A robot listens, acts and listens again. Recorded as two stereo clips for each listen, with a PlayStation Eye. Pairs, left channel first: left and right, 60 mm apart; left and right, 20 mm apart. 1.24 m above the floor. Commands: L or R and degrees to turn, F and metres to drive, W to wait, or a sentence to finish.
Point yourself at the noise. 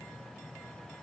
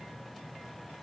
W
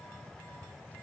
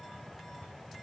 W
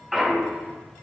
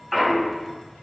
R30
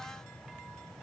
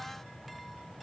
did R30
W
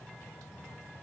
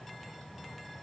I heard a clunk, but can't make it out now. It was about 25° left or 145° right.